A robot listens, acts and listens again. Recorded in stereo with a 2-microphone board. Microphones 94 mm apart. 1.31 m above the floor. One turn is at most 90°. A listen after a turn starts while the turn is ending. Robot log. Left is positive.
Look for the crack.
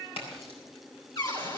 cmd yaw +90
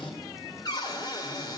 end: I heard a crack from this way, but can't make it out now.